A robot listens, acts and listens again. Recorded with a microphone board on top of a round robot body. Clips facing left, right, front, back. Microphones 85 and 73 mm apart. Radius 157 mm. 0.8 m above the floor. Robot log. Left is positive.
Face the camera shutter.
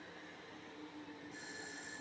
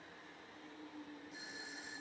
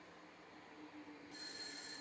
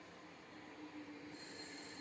cmd idle
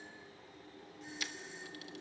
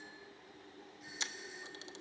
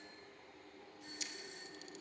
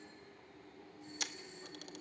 note: The camera shutter: 155° right.
cmd yaw -155
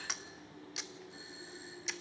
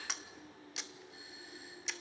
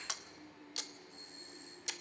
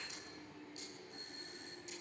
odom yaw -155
end: Found it: a camera shutter, straight ahead, 1 to 2 m away.